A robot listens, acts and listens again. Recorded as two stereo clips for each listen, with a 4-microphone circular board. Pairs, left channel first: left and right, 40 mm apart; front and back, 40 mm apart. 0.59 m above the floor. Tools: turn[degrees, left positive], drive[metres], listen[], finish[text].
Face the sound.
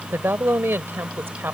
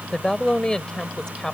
Thought: The woman speaking: 70° right.
Action: turn[-70]
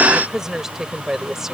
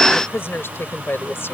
Thought: The woman speaking is now 10° right.
Action: turn[-10]
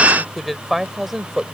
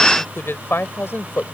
Action: finish[Facing the woman speaking.]